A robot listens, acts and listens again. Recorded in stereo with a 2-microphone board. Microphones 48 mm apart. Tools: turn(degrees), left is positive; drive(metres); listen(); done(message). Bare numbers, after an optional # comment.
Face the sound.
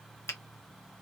# The finger snap: about 60° left or 120° left.
turn(60)
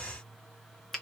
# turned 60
done("Found it: a finger snap, straight ahead.")